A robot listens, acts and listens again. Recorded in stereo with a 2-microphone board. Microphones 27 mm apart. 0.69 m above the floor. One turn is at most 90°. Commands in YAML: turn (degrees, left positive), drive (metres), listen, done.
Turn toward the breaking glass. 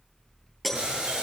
turn: 30
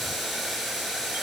listen: true
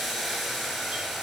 done: "I heard breaking glass, but can't make it out now. It was about 30° right or 150° left."